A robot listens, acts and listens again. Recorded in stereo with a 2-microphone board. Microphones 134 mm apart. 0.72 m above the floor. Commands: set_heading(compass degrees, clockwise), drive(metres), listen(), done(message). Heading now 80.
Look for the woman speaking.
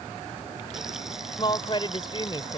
set_heading(45)
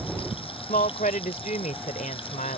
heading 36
set_heading(301)
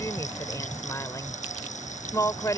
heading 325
set_heading(300)
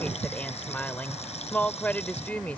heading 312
set_heading(302)
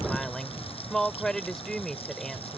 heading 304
done("Found it: a woman speaking, straight ahead.")